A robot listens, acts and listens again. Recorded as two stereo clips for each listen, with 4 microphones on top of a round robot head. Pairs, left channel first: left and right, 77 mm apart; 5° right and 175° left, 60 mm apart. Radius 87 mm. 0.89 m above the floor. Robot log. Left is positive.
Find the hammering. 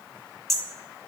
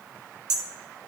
note: The hammering: 175° left.
cmd yaw +175
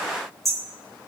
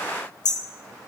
end: Found it: hammering, straight ahead, 1 to 2 m away.